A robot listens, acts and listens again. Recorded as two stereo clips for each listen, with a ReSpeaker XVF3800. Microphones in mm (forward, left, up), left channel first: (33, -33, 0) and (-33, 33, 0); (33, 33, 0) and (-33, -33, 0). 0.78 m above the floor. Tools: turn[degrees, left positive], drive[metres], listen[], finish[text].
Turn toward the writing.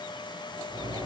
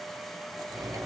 Action: listen[]
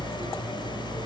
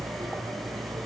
Action: listen[]
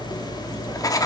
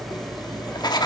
Action: finish[Facing the writing, 1 to 2 m away.]